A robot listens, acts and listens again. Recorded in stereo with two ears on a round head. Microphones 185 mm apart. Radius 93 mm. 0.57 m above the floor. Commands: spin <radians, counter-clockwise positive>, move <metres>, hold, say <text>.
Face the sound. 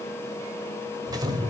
spin -0.35
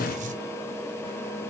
spin -2.44
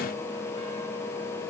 say I heard an explosion from this way, but can't make it out now.